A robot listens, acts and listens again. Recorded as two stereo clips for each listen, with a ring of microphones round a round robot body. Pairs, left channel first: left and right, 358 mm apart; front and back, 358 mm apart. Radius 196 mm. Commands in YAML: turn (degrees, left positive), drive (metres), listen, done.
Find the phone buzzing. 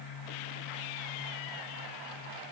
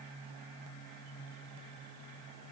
listen: true
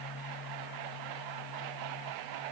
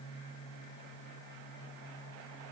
listen: true
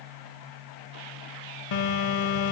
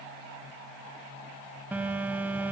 turn: 95
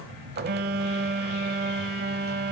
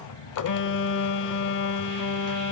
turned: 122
turn: -30
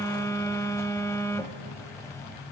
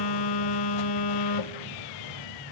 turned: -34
turn: 10
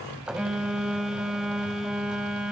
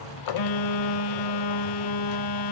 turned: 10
done: "Found it: a phone buzzing, straight ahead."